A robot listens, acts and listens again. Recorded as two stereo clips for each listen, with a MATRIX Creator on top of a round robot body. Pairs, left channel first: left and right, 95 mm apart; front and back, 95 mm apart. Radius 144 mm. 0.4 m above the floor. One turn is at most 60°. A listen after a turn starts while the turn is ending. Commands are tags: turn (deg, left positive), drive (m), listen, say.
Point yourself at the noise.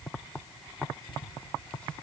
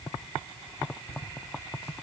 <turn deg="15"/>
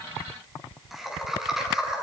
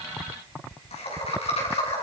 <say>Found it: laughter, straight ahead.</say>